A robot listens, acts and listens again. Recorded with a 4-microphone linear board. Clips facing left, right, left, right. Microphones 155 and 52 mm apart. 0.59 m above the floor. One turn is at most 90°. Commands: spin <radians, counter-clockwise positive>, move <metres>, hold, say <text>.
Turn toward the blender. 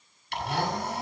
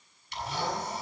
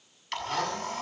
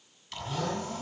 spin 1.13
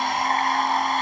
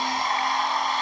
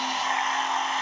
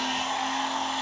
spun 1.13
spin 0.87
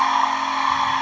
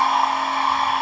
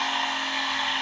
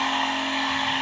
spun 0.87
say Facing the blender.